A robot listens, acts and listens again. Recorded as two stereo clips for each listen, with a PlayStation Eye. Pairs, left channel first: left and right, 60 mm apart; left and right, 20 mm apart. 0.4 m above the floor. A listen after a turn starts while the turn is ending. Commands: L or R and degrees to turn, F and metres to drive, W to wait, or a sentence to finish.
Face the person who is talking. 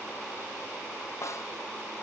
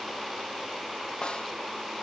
W
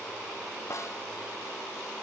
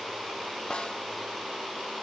W
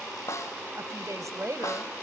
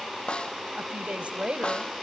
R60
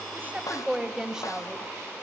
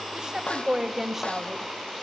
R10
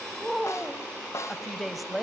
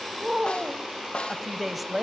Facing the woman speaking.